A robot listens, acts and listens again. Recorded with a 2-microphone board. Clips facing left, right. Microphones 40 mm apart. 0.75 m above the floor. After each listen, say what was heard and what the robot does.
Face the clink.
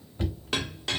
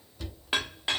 The clink: about 20° right or 160° right. Turn 20° right.
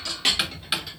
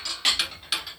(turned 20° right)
Facing the clink.